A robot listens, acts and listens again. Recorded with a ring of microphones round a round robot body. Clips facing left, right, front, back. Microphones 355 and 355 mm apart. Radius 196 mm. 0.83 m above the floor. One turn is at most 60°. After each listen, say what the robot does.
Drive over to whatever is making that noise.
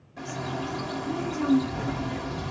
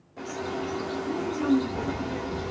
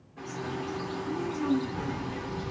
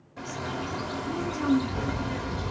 Turn 60° left.
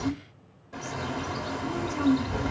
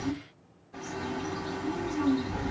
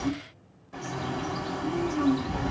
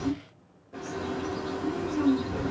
Turn 60° left.
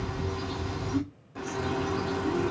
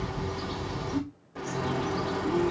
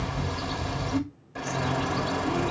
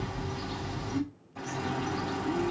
Turn 15° left.
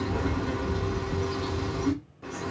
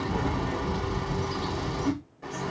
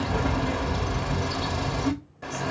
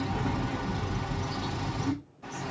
Drive 1.0 m forward.
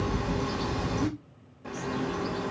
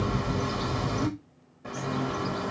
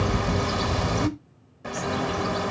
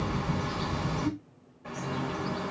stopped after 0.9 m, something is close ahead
Arrived at the bird, straight ahead.